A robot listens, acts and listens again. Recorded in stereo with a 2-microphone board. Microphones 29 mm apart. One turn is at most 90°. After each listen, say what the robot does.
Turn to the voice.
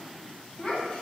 Turn 35° left.
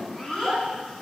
Facing the child speaking.